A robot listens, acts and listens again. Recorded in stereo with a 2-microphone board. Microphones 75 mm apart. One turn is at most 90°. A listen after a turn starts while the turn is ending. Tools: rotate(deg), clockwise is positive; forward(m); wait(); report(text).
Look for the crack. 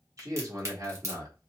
rotate(40)
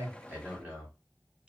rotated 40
wait()
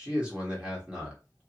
report("I heard a crack, but can't make it out now. It was about straight ahead or 100° right.")